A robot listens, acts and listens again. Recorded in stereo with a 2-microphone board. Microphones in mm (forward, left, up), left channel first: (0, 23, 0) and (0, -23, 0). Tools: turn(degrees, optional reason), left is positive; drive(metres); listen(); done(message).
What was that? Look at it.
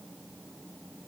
listen()
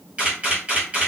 turn(degrees=-30, reason="The camera shutter: about 30° right or 150° right.")
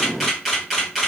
done("Facing the camera shutter, 1 to 2 m away.")